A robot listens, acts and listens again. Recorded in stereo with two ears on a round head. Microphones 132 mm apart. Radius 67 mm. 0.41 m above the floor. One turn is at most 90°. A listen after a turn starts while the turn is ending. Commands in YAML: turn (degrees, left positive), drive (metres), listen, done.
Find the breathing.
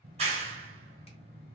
listen: true
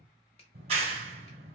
listen: true
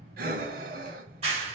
turn: -60
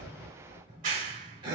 turn: -35
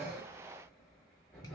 done: "Found it: breathing, straight ahead, 1 to 2 m away."